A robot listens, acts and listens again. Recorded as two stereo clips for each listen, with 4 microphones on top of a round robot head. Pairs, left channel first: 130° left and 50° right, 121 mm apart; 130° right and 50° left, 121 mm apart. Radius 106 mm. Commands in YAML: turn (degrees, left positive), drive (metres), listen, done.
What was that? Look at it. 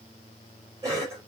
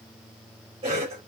turn: 10
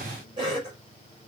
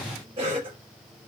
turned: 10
done: "Found it: a cough, straight ahead."